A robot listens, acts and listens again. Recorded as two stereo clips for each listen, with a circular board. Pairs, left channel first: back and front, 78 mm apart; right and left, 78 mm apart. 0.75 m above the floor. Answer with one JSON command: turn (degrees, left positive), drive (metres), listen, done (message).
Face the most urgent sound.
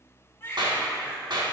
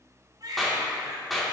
{"turn": 120}
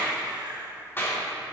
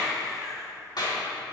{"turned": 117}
{"done": "Facing the baby crying, 1 to 2 m away."}